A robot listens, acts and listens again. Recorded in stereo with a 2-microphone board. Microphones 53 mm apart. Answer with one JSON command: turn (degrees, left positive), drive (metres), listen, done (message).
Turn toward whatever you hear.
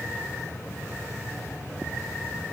{"listen": true}
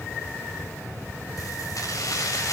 {"turn": 90}
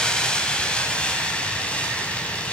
{"turn": 20}
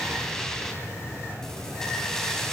{"turn": 10}
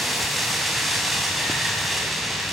{"done": "Found it: keys jangling, straight ahead."}